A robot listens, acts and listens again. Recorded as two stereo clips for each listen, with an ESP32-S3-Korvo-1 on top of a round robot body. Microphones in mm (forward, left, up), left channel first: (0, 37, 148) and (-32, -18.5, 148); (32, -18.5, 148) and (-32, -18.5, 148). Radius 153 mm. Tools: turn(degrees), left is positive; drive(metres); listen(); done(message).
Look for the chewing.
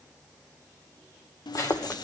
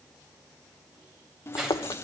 turn(degrees=10)
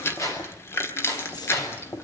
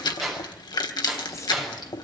done("Facing the chewing, 1 to 2 m away.")